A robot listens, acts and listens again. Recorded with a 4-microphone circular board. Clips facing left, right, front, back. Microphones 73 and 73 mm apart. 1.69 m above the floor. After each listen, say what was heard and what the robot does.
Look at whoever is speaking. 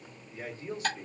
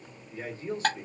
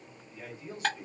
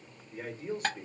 The man speaking: 140° right. Turn 140° right.
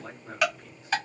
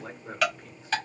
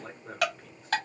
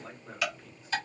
The man speaking is now 35° right. Turn 35° right.
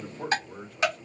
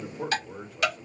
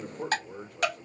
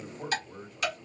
The man speaking is now 10° right. Turn 10° right.
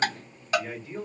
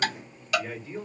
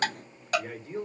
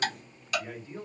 Facing the man speaking.